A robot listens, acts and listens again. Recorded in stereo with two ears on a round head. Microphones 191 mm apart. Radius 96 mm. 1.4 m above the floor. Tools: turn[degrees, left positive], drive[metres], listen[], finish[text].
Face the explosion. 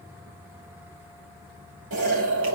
Thought: The explosion: about 65° right or 115° right.
Action: turn[-65]
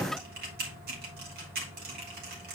Action: listen[]
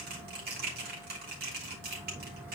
Action: finish[I heard an explosion, but can't make it out now. It was about straight ahead or 50° right.]